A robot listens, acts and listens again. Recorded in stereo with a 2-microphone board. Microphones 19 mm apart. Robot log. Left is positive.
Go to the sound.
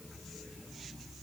cmd idle
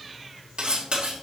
note: The cutlery clinking: about 65° right or 115° right.
cmd yaw -65
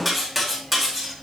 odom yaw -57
note: So it is at 10° right.
cmd yaw -10
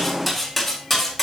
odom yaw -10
cmd fwd 1.0
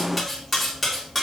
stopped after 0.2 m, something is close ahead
end: Blocked. The cutlery clinking is further on, straight ahead.